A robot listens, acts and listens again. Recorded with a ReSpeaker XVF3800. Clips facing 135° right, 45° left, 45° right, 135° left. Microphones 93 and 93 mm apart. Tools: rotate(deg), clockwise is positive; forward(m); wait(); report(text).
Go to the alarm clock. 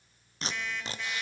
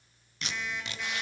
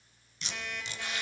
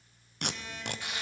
rotate(45)
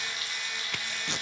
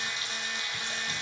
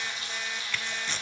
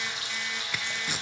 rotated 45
wait()
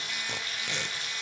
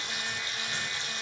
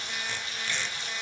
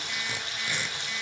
wait()
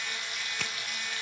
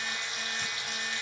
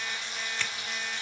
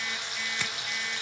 report("Facing where the alarm clock came from. I can't hear it now. I did not reach it.")